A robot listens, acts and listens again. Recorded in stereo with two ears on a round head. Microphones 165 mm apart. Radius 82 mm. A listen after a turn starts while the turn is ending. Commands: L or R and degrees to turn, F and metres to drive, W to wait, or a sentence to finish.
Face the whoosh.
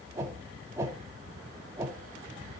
R15
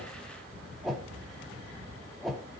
Facing the whoosh.